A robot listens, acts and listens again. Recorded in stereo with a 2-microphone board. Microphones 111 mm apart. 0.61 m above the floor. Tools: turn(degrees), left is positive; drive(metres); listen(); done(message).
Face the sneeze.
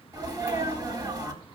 turn(degrees=-35)
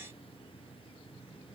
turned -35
listen()
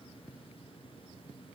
done("I heard a sneeze, but can't make it out now. It was about straight ahead or 110° right.")